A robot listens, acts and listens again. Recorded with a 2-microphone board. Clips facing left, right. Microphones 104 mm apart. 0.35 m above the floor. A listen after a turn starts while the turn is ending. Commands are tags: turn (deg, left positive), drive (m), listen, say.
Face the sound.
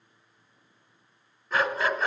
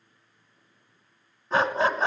<turn deg="-30"/>
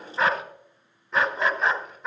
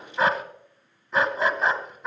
<say>Found it: a dog barking, straight ahead, 1 to 2 m away.</say>